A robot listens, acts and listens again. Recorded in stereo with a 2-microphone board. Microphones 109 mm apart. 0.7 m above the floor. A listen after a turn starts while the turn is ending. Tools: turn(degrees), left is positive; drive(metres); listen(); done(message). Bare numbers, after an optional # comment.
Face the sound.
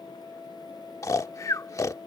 # The snoring: about 30° left or 150° left.
turn(30)
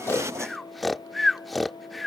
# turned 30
done("Found it: snoring, straight ahead.")